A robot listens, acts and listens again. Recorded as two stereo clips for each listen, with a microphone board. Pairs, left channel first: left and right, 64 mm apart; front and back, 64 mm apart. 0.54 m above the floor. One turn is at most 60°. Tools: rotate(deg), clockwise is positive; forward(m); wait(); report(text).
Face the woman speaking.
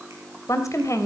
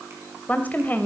rotate(-60)
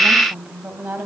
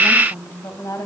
rotate(25)
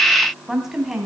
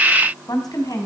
rotate(10)
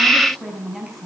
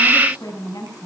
report("Found it: a woman speaking, straight ahead.")